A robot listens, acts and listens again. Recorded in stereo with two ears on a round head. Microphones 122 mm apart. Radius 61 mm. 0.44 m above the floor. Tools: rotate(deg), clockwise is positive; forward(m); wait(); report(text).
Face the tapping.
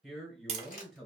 rotate(50)
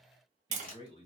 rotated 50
rotate(70)
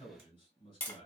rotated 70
rotate(-15)
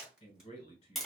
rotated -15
report("Found it: tapping, straight ahead, under 1 m away.")